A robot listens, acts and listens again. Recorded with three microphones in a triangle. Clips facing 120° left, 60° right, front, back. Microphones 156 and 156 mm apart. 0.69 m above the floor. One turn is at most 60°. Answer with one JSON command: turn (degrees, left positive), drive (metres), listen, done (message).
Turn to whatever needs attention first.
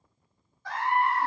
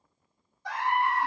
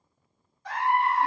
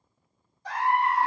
{"turn": -60}
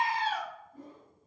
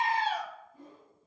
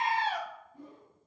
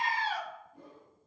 {"turn": -60}
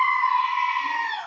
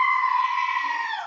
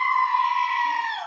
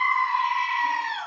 {"turn": -15}
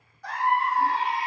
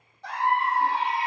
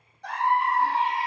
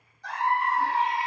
{"done": "Found it: a scream, straight ahead."}